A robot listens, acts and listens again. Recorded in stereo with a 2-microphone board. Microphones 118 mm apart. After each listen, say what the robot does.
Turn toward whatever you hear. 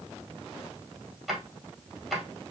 Turn 30° left.
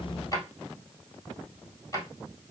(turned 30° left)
Turn 150° left.
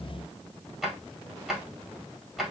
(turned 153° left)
Found it: a drawer, straight ahead, 1 to 2 m away.